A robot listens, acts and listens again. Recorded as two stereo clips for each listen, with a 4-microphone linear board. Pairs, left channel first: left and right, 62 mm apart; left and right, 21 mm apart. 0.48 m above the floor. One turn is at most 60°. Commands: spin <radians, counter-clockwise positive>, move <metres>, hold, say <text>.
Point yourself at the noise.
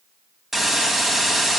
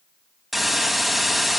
spin -0.52
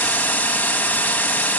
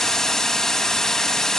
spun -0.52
spin 0.44
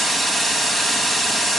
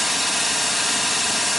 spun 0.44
say Found it: a hiss, straight ahead.